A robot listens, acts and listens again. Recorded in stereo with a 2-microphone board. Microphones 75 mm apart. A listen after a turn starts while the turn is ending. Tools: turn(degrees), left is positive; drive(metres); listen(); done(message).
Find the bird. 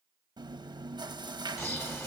turn(degrees=35)
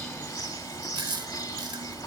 turn(degrees=110)
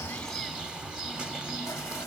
turn(degrees=-10)
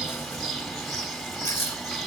done("Facing the bird, 1 to 2 m away.")